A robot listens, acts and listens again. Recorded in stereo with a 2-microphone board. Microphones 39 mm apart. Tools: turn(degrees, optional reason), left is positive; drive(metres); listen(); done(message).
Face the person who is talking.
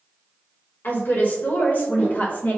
turn(degrees=40, reason="The woman speaking: about 40° left or 140° left.")
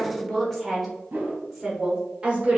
turn(degrees=-25, reason="So it is at 25° right.")
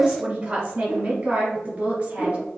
turn(degrees=-30, reason="The woman speaking is now 30° right.")
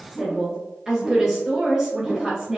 done("Found it: a woman speaking, straight ahead.")